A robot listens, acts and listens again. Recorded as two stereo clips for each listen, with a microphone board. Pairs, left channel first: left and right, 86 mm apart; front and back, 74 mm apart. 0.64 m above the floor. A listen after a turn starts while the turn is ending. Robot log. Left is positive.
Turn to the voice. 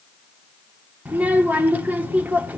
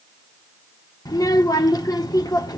note: The child speaking: 20° right.
cmd yaw -20
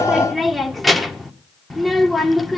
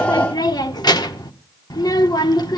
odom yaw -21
end: Facing the child speaking.